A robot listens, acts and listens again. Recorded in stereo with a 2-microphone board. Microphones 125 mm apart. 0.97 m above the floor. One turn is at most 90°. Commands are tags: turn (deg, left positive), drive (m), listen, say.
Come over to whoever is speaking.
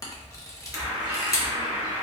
<listen/>
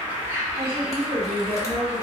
<turn deg="-50"/>
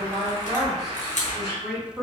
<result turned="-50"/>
<drive m="1.0"/>
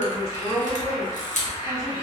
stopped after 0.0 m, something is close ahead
<say>Something is in my way. I am facing the woman speaking but have not reached it.</say>